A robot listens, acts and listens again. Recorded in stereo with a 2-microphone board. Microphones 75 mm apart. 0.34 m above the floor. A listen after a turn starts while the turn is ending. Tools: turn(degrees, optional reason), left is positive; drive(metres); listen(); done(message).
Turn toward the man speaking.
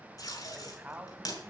turn(degrees=-20, reason="The man speaking: about 20° right or 160° right.")
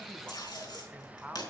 turn(degrees=-15, reason="The man speaking: about 15° right or 165° right.")
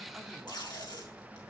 listen()
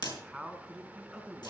turn(degrees=-30)
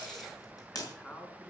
turn(degrees=15, reason="So it is at 15° left.")
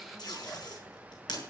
listen()
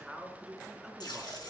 done("Facing the man speaking.")